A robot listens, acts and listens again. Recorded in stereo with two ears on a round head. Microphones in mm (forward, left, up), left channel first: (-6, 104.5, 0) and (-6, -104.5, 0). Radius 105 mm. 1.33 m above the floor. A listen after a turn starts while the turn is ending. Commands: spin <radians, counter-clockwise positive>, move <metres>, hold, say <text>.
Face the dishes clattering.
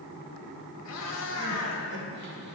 hold
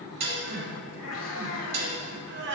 spin -0.70
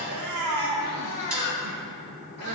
hold
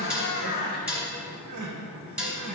say Found it: dishes clattering, straight ahead, 1 to 2 m away.